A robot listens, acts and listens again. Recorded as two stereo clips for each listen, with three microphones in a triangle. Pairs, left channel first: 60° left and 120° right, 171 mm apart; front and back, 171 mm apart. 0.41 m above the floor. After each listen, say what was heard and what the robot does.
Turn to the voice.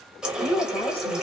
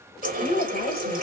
Facing the woman speaking.